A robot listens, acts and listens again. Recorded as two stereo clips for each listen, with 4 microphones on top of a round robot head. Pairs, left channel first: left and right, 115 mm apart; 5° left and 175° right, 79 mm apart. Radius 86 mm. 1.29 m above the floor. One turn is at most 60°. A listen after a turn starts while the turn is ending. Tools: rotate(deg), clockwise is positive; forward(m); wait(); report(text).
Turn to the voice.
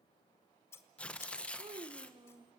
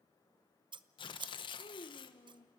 rotate(40)
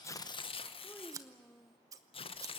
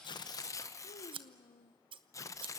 report("Facing the child speaking.")